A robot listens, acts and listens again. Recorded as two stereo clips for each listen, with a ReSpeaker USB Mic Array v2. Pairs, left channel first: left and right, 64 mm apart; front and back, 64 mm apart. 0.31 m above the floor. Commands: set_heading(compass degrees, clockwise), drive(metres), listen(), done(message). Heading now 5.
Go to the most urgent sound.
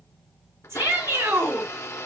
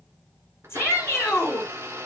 set_heading(50)
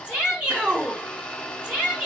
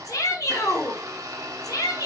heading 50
set_heading(70)
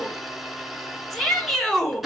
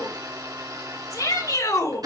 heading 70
drive(1.0)
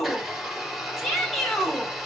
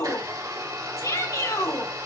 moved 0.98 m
drive(1.0)
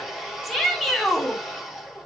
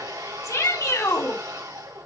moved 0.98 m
drive(1.0)
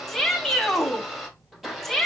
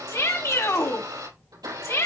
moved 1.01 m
drive(1.0)
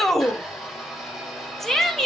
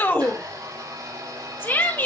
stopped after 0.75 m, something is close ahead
set_heading(60)
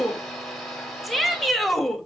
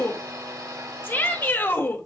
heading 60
done("I am next to the shout.")